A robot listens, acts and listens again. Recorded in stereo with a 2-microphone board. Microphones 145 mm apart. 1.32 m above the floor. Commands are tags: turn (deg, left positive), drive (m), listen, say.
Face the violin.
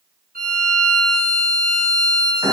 <turn deg="-90"/>
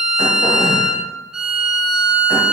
<say>Facing the violin.</say>